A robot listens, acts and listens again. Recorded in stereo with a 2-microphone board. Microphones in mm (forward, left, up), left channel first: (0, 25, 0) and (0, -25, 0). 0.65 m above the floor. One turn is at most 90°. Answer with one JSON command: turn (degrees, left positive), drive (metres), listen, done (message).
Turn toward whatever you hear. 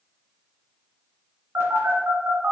{"turn": -60}
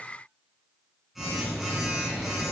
{"done": "Found it: a phone buzzing, straight ahead."}